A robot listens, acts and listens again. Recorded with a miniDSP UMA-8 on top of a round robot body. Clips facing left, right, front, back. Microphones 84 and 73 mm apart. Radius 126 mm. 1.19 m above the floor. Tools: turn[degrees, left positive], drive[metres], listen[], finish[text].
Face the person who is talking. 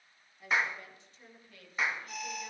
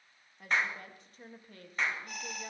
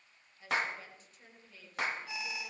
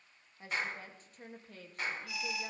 Thought: The woman speaking: 140° right.
Action: turn[-140]
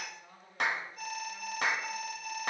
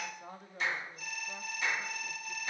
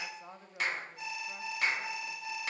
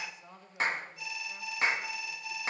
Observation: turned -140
Thought: The woman speaking is now 55° right.
Action: turn[-55]
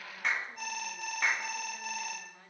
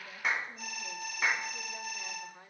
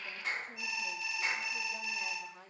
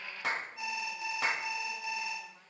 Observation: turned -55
Thought: The woman speaking is now 15° right.
Action: turn[-15]
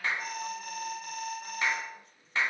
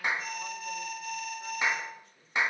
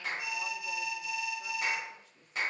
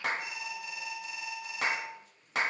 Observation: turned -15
Action: listen[]
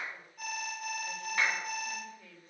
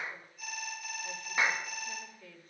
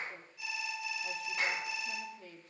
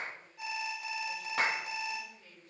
Action: finish[Found it: a woman speaking, straight ahead, over 4 m away.]